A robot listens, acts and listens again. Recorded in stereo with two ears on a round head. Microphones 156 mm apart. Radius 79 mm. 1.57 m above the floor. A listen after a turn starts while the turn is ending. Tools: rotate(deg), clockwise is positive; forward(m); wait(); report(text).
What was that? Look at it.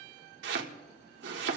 rotate(70)
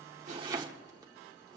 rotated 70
rotate(25)
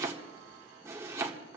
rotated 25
rotate(15)
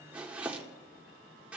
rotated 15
rotate(10)
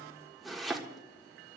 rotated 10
report("Facing the chopping.")